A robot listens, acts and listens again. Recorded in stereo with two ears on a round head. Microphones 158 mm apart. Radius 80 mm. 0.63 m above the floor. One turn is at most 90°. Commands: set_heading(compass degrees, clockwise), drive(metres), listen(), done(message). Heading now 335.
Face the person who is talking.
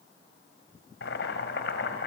listen()
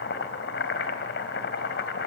listen()
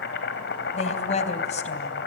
set_heading(290)
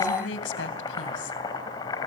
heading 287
set_heading(197)
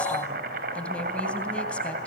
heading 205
set_heading(195)
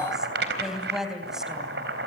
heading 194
done("Facing the woman speaking.")